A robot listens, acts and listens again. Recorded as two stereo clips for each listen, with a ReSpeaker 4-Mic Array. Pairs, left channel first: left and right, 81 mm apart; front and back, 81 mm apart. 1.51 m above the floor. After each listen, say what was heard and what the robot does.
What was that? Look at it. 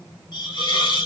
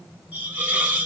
The hiss: 110° left. Turn 110° left.
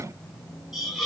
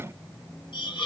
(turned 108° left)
Found it: a hiss, straight ahead.